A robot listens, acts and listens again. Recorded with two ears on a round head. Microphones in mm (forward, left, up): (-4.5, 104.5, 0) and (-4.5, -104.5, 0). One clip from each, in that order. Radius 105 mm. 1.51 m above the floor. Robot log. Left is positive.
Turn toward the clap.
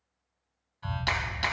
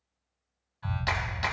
cmd yaw +30
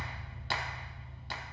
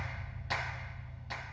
note: So it is at 140° left.
cmd yaw +140
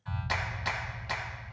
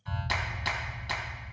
note: The clap is now 10° right.
cmd yaw -10
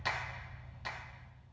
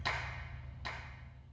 end: Facing the clap.